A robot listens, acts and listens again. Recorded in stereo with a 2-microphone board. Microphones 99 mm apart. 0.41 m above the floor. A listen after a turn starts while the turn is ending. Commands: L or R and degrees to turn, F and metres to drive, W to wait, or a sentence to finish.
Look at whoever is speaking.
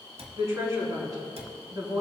R40
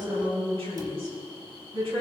R105
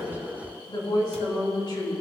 L50
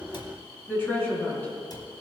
L20
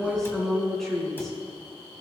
Facing the woman speaking, over 4 m away.